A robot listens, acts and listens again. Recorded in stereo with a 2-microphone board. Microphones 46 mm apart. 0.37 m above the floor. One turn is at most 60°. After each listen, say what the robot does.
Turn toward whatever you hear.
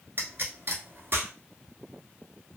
Turn 55° right.
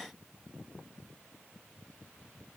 Keep listening.
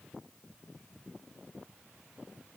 I heard a pop, but can't make it out now. It was about straight ahead or 70° right.